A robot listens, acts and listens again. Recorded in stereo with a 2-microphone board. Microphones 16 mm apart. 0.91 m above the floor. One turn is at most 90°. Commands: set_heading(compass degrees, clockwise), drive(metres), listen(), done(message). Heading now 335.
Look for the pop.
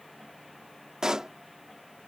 set_heading(20)
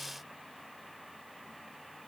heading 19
listen()
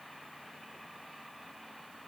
done("I heard a pop, but can't make it out now. It was about 5° right or 90° right.")